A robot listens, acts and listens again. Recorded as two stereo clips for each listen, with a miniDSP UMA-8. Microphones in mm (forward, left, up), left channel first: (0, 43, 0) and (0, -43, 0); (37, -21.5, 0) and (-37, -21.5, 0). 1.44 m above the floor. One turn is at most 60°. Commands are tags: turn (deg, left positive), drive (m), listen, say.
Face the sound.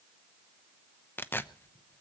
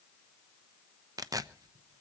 <turn deg="60"/>
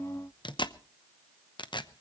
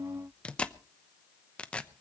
<turn deg="60"/>
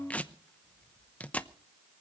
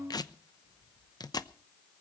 <turn deg="15"/>
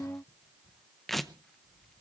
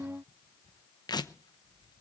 <say>Facing the tearing paper, under 1 m away.</say>